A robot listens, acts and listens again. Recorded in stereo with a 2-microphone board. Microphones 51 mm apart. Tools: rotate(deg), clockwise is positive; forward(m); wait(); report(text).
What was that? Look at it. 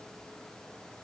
wait()
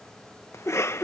rotate(-60)
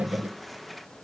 report("Facing the cough.")